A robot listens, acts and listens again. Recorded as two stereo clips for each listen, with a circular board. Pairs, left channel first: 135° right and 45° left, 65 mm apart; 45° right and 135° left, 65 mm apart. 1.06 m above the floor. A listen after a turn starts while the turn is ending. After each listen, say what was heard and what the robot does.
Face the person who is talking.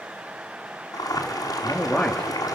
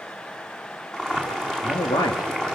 The man speaking: 65° right. Turn 65° right.
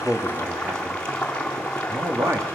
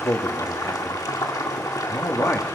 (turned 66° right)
Facing the man speaking.